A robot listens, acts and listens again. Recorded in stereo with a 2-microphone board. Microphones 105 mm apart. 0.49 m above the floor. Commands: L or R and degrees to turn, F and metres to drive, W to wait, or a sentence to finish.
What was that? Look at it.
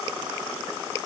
W
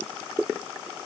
W
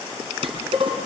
R65
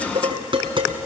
R50
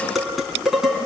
Found it: dishes clattering, straight ahead, 2 to 4 m away.